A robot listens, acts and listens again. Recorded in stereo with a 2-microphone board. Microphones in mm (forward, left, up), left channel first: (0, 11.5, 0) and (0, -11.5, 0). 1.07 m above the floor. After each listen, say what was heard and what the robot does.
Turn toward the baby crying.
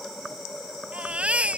The baby crying: about 70° right or 110° right. Turn 70° right.
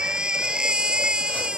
So it is at 40° right. Turn 40° right.
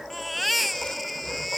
Facing the baby crying.